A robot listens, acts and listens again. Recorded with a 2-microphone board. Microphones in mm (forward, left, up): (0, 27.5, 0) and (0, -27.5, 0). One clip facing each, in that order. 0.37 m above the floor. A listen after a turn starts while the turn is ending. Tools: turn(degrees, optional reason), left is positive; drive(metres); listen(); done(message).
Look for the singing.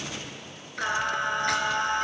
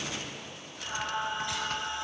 turn(degrees=60, reason="The singing: about 60° left or 120° left.")
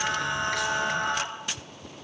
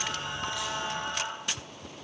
turn(degrees=70, reason="So it is at 70° left.")
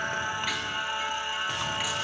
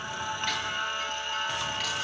turn(degrees=15, reason="The singing is now 15° left.")
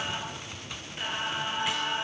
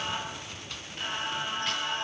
turn(degrees=10, reason="The singing is now 10° left.")
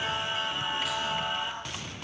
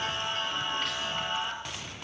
done("Facing the singing, over 4 m away.")